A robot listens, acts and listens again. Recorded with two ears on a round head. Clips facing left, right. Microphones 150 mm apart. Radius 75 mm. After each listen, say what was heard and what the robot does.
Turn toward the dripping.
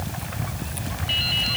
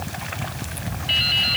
The dripping: about 65° right or 115° right. Turn 65° right.
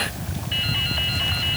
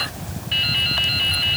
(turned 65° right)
So it is at 50° right. Turn 50° right.
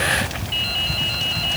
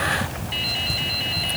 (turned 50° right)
The dripping is now 10° right. Turn 10° right.
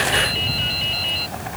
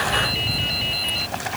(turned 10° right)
Found it: dripping, straight ahead.